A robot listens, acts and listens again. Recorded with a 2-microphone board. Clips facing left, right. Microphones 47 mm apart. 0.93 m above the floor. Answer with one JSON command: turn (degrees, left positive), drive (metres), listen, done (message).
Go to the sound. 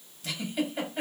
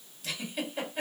{"turn": -30}
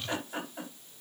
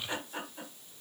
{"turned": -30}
{"turn": 25}
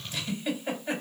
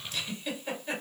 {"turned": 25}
{"turn": 20}
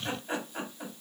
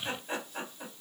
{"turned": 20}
{"drive": 1.0}
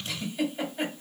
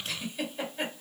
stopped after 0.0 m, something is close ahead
{"done": "Blocked. The giggle is further on, straight ahead."}